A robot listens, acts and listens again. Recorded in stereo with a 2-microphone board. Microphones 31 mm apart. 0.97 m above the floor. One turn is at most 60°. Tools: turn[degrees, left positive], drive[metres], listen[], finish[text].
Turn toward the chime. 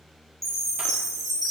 Action: turn[30]
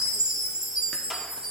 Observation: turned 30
Thought: So it is at 25° right.
Action: turn[-25]
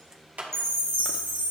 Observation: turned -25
Thought: The chime is now 15° left.
Action: turn[15]
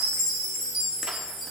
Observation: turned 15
Action: finish[Facing the chime, 2 to 4 m away.]